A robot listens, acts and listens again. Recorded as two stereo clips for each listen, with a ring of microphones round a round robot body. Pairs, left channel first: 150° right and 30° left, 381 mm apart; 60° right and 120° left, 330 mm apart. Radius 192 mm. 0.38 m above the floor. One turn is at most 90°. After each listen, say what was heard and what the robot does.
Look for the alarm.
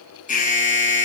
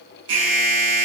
The alarm: 140° left. Turn 90° left.
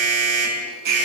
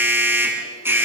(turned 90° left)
The alarm is now 35° left. Turn 35° left.
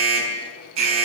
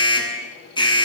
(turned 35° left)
The alarm is now 15° left. Turn 15° left.
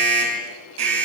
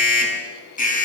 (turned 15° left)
Facing the alarm, over 4 m away.